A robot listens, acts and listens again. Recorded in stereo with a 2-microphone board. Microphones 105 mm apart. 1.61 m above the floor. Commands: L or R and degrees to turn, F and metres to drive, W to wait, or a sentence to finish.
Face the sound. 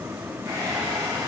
R35
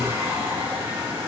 R110
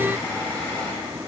L25
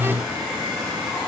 Facing the hair dryer.